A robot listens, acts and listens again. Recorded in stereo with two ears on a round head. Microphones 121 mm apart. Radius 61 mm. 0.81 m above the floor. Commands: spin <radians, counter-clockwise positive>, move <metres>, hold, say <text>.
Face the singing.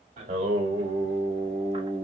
spin -0.44
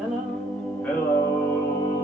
spin 0.52
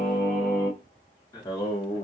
spin 0.61
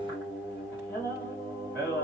spin 0.26
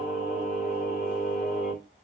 say Facing the singing, 2 to 4 m away.